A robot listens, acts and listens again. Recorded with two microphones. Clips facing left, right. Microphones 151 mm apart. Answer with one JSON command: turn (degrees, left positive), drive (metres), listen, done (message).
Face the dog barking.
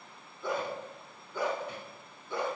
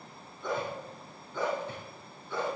{"turn": 15}
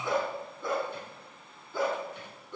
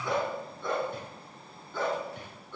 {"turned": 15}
{"turn": 15}
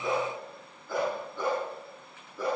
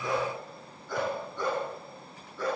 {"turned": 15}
{"turn": 30}
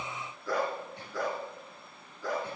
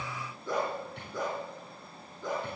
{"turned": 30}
{"turn": -20}
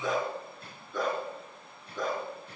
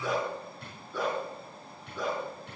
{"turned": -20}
{"done": "Found it: a dog barking, straight ahead, 2 to 4 m away."}